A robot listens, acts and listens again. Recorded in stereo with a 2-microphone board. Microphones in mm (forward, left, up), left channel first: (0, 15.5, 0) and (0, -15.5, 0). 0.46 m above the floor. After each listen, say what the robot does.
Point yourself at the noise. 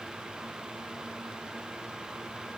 Keep listening.
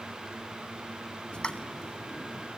Turn 30° left.
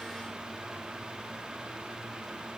Keep listening.
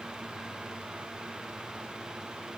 I heard a pop, but can't make it out now. It was about straight ahead or 120° left.